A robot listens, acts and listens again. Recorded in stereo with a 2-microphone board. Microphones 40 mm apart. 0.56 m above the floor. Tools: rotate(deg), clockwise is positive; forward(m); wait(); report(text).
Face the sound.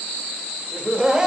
rotate(20)
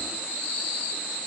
wait()
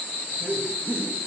rotate(120)
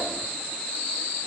wait()
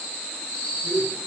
rotate(30)
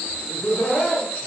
rotate(-15)
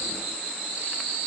wait()
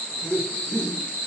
report("Found it: laughter, straight ahead.")